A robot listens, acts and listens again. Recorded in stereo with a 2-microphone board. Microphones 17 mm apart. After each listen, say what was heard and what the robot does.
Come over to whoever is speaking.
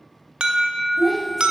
Turn 30° left.
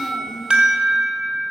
Keep listening.
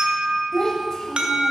So it is at 145° left. Turn 145° left.
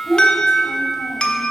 Drive 1.0 m forward.
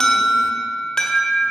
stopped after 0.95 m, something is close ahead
Keep listening.
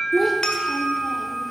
Arrived at the child speaking, straight ahead.